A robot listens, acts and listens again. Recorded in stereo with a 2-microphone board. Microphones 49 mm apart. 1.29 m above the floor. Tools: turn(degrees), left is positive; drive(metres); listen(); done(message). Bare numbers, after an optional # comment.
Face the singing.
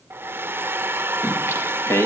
# The singing: about 70° left or 110° left.
turn(70)
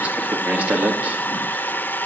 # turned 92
# So it is at 35° right.
turn(-35)
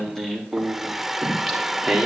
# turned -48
done("Found it: singing, straight ahead, 2 to 4 m away.")